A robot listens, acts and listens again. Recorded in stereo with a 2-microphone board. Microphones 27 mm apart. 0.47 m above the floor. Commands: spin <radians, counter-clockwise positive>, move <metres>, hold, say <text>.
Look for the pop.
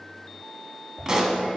spin -0.35
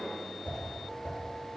hold
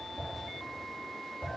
say I heard a pop, but can't make it out now. It was about straight ahead or 140° right.